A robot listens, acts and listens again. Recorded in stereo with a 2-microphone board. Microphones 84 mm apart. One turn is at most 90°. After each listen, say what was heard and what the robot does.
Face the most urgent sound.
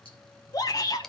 The shout: about 45° left or 135° left. Turn 45° left.
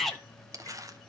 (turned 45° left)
Facing the shout, 1 to 2 m away.